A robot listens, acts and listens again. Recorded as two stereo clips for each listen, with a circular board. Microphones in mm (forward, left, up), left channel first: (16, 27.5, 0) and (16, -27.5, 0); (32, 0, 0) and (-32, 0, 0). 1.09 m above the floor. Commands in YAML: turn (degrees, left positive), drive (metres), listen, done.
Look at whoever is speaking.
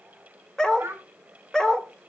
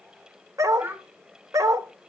turn: -125
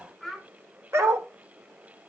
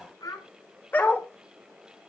done: "Found it: a child speaking, straight ahead, over 4 m away."